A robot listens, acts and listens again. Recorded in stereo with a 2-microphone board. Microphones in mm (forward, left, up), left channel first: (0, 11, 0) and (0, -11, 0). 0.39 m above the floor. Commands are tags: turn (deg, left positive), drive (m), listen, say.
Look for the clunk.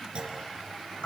<turn deg="-50"/>
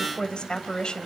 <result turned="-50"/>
<listen/>
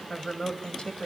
<say>I heard a clunk, but can't make it out now. It was about straight ahead or 80° right.</say>